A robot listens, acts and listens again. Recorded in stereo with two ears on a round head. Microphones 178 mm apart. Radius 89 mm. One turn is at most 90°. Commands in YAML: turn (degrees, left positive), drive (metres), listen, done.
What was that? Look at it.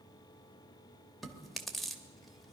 turn: 30
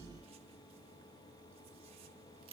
turn: -30
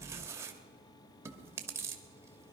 turn: -15
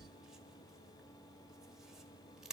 done: "Found it: chewing, straight ahead, 1 to 2 m away."